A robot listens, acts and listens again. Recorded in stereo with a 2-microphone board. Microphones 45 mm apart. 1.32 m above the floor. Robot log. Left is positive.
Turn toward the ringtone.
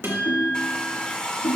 note: The ringtone: about 75° left or 105° left.
cmd yaw +75
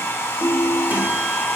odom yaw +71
note: So it is at 15° left.
cmd yaw +15
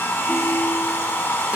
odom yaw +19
cmd idle
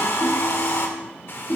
end: Facing the ringtone.